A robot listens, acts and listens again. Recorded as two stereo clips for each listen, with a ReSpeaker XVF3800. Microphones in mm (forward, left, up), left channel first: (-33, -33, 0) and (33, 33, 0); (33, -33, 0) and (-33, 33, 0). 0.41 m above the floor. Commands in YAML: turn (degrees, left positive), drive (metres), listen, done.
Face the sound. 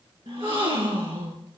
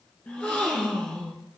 turn: 30
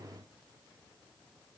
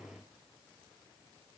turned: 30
done: "Facing where the gasp came from. I can't hear it now."